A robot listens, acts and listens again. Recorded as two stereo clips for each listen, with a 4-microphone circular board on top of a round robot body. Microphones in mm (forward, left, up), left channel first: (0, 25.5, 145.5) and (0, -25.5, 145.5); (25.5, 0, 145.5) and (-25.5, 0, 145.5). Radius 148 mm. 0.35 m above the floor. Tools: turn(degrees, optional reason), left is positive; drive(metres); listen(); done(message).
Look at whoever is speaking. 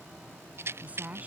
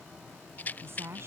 turn(degrees=-145, reason="The woman speaking: 145° right.")
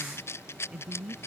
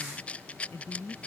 turn(degrees=-20, reason="The woman speaking is now 20° right.")
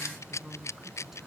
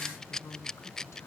done("Found it: a woman speaking, straight ahead.")